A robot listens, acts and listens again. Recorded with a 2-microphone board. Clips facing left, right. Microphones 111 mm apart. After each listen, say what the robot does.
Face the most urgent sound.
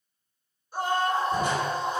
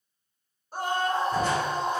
Turn 45° right.
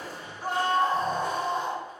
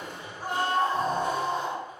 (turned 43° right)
Turn 90° right.
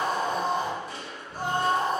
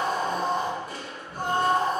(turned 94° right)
Found it: a scream, straight ahead.